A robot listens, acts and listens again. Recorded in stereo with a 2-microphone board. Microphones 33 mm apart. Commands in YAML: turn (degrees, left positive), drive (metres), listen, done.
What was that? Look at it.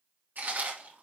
turn: -75
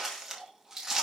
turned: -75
turn: -15
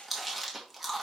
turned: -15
done: "Facing the chewing, 2 to 4 m away."